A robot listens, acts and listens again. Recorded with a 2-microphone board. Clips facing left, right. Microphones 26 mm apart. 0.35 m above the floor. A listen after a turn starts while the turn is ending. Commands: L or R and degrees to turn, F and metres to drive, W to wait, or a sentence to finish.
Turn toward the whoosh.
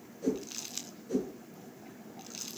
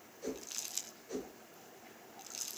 R30
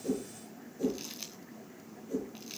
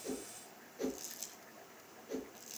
R140
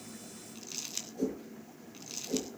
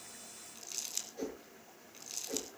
R25
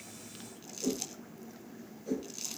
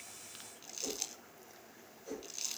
Found it: a whoosh, straight ahead.